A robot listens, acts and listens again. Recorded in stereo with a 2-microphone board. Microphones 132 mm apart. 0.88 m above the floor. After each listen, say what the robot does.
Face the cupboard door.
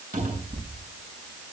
Turn 70° right.
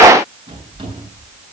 Turn 35° right.
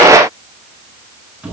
Turn 10° right.
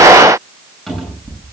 Facing the cupboard door.